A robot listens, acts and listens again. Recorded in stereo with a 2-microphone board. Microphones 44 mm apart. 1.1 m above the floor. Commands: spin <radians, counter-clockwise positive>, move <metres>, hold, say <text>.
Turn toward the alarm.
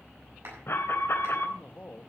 spin 1.05
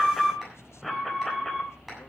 say Facing the alarm, 2 to 4 m away.